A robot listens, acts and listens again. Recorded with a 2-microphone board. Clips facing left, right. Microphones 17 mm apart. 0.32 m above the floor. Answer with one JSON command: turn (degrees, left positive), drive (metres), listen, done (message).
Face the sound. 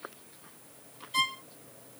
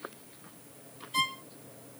{"turn": 30}
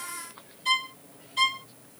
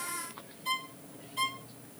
{"turn": 140}
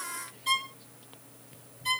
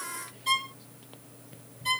{"done": "Found it: a violin, straight ahead."}